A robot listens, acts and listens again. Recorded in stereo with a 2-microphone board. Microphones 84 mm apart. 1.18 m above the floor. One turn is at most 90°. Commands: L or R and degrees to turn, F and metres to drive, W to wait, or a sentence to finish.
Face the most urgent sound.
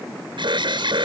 R70
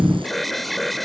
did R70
Facing the alarm.